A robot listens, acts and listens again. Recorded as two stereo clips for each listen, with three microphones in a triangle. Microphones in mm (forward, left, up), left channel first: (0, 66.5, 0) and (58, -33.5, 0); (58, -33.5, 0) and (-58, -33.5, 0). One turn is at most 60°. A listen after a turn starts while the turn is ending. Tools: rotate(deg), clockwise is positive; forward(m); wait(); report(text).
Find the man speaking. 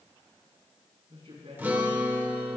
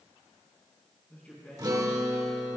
rotate(60)
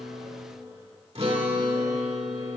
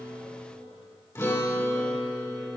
rotate(15)
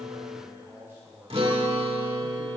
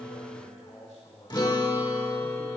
rotate(-10)
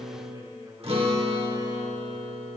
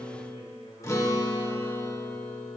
wait()
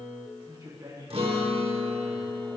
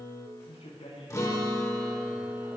report("Facing the man speaking.")